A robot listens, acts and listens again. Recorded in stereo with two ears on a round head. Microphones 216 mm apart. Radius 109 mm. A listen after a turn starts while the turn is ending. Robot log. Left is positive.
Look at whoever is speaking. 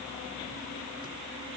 cmd idle
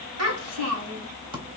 note: The child speaking: about 75° right or 105° right.
cmd yaw -75
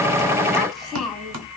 end: Facing the child speaking, 1 to 2 m away.